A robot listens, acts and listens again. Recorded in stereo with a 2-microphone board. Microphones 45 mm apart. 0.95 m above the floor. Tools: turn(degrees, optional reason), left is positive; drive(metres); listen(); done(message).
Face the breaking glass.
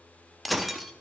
turn(degrees=30)
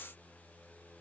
listen()
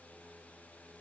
done("I heard breaking glass, but can't make it out now. It was about 30° right or 150° left.")